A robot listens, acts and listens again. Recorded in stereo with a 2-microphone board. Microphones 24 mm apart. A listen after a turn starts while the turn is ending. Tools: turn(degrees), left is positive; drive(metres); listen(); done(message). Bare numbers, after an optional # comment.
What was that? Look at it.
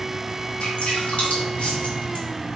# The dripping: about 70° left or 110° left.
turn(70)
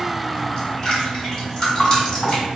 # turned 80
# So it is at 25° left.
turn(25)
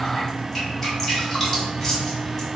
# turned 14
# The dripping is now 10° left.
turn(10)
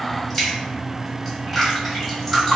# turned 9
done("Facing the dripping.")